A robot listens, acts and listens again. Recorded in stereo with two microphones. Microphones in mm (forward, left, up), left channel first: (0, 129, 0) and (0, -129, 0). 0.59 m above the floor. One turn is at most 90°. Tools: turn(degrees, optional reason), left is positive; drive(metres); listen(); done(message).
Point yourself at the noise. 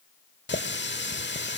turn(degrees=45, reason="The running tap: about 45° left or 135° left.")
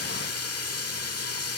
turn(degrees=85, reason="So it is at 85° left.")
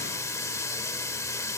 turn(degrees=10, reason="The running tap is now 10° left.")
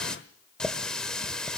done("Found it: a running tap, straight ahead, 1 to 2 m away.")